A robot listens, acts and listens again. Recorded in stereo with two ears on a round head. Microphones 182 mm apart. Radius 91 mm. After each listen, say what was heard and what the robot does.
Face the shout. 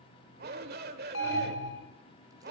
The shout: about 55° right or 125° right. Turn 55° right.
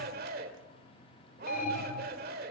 So it is at 60° right. Turn 60° right.
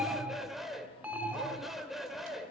Found it: a shout, straight ahead.